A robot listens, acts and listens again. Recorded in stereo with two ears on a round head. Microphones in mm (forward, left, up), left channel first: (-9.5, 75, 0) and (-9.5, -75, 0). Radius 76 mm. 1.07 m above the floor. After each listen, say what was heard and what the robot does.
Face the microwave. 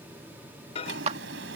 The microwave: about 35° left or 145° left. Turn 35° left.
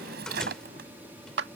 Keep listening.
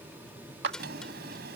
Keep listening.
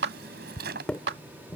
Facing the microwave.